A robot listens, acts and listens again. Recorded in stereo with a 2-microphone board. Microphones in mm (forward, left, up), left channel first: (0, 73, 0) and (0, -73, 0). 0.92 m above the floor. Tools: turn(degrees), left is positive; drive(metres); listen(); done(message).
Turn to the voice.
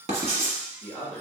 turn(degrees=30)
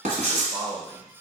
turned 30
turn(degrees=-20)
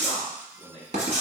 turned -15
done("Facing the man speaking, 1 to 2 m away.")